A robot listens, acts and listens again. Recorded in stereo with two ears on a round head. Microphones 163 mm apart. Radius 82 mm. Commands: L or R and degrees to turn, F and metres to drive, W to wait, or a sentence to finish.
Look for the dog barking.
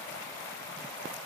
W
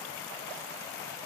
W
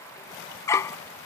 L15
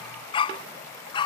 L30
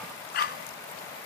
L120
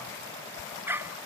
R15
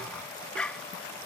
Facing the dog barking.